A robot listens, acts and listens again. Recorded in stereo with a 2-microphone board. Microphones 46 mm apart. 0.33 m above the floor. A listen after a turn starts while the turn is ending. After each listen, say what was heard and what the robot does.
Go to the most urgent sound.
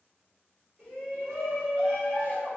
The shout: about 25° right or 155° right. Turn 25° right.
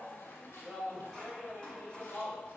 Drive 1.0 m forward.
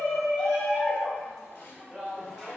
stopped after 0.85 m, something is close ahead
The shout is now 10° right. Turn 10° right.
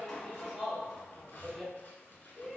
I am next to the shout.